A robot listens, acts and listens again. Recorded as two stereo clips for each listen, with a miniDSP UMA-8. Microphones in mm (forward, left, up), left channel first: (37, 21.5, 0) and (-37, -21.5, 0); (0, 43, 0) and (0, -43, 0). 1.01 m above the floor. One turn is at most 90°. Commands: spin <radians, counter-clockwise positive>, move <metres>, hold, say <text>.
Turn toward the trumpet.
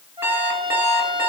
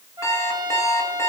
spin -1.57
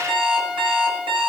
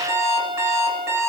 spin -1.31
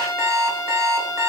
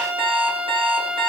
spin -0.44
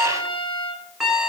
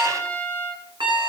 say Found it: a trumpet, straight ahead, over 4 m away.